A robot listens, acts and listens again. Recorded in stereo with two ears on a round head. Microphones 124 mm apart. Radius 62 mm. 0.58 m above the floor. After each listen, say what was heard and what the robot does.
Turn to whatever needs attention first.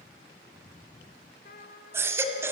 The baby crying: about 15° right or 165° right. Turn 15° right.
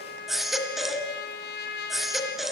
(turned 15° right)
Found it: a baby crying, straight ahead, 2 to 4 m away.